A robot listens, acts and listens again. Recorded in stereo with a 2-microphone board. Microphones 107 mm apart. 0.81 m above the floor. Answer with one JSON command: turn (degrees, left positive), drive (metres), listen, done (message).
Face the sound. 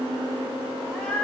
{"turn": 30}
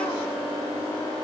{"listen": true}
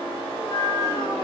{"turn": 130}
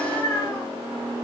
{"turn": 20}
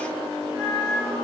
{"done": "Facing the cat meowing."}